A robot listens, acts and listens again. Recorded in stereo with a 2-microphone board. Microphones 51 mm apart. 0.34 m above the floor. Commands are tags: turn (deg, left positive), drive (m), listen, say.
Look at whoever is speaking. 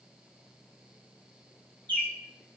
<listen/>
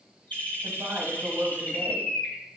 <turn deg="-45"/>
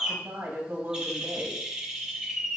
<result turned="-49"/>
<turn deg="-80"/>
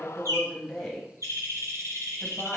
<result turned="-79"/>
<say>Found it: a woman speaking, straight ahead.</say>